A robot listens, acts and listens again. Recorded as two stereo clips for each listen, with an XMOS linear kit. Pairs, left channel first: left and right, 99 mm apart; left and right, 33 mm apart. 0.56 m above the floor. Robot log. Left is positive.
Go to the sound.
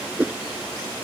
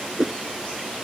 note: The whoosh: about 15° right or 165° right.
cmd yaw -15
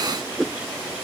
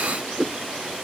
cmd fwd 1.0
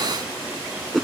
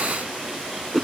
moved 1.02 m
cmd fwd 1.0
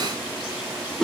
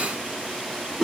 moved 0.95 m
cmd fwd 1.0
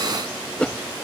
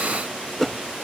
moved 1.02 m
note: The whoosh is now 10° left.
cmd yaw +10
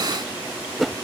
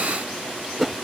cmd fwd 1.0
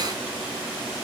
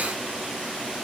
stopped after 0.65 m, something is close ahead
cmd idle
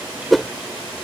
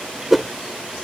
end: Arrived at the whoosh, straight ahead.